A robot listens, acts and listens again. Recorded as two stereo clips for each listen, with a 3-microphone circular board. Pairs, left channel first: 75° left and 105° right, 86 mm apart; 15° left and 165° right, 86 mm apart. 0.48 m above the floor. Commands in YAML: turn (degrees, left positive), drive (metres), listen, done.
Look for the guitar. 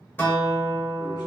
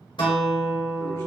turn: 10
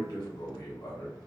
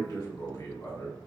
listen: true
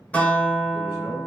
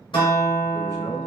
done: "Facing the guitar, under 1 m away."